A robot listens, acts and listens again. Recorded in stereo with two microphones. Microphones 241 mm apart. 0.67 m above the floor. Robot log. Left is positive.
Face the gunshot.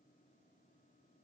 cmd idle
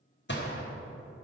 note: The gunshot: about 50° left or 130° left.
cmd yaw +50
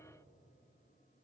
cmd idle
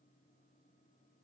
end: I heard a gunshot, but can't make it out now. It was about straight ahead or 80° left.